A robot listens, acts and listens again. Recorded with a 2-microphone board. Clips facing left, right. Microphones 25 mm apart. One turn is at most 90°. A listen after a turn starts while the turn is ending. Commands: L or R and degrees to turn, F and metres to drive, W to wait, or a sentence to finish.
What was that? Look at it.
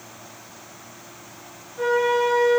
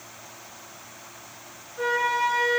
R15
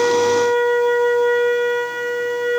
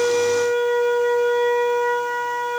Found it: a flute, straight ahead, 1 to 2 m away.